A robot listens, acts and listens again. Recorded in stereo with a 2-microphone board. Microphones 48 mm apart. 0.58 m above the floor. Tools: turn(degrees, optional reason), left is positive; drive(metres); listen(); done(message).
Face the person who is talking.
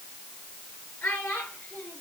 turn(degrees=50, reason="The child speaking: about 50° left or 130° left.")
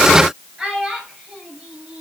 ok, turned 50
turn(degrees=-10, reason="So it is at 10° right.")
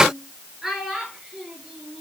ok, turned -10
done("Facing the child speaking.")